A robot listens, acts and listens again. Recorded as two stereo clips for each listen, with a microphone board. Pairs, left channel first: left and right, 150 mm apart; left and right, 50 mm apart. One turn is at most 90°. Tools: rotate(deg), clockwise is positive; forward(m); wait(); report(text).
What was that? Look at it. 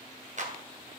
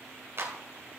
rotate(55)
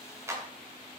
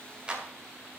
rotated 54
rotate(20)
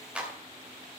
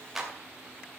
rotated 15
rotate(10)
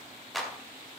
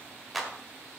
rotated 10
report("Facing the clap.")